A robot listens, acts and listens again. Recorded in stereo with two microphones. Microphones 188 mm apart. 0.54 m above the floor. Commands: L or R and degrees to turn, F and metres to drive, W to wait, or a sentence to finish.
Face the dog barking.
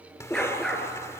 L30
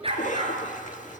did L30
R30
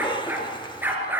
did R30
R10
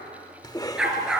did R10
Found it: a dog barking, straight ahead, over 4 m away.